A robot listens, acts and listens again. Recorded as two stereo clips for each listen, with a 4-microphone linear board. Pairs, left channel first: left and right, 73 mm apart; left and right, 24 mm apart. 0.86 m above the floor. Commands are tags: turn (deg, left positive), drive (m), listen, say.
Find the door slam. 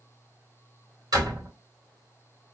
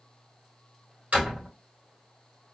<turn deg="-70"/>
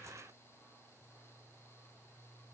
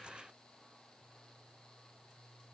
<listen/>
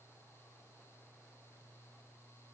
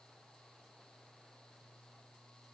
<say>I heard a door slam, but can't make it out now. It was about straight ahead or 40° right.</say>